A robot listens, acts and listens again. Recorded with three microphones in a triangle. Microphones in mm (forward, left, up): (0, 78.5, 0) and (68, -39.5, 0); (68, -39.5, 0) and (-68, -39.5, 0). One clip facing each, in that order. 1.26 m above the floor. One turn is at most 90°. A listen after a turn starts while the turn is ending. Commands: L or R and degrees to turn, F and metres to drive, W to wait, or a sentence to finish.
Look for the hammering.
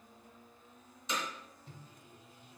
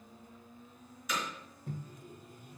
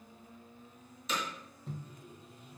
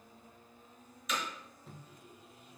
L60
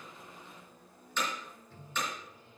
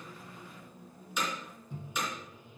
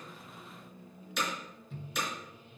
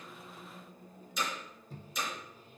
L20
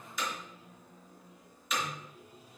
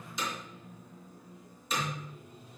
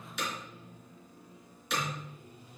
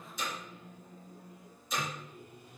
Found it: hammering, straight ahead.